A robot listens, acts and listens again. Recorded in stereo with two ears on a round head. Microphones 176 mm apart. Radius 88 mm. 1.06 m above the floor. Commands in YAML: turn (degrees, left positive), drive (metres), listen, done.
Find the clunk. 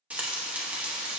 listen: true
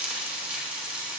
listen: true
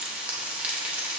done: "I can't make out a clunk to turn to."